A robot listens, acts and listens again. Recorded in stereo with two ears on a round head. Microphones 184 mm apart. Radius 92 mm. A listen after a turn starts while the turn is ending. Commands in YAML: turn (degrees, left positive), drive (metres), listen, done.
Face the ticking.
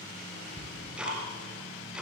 turn: -30
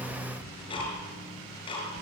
turn: 25
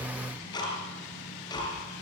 turn: 20
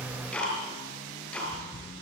done: "Facing the ticking."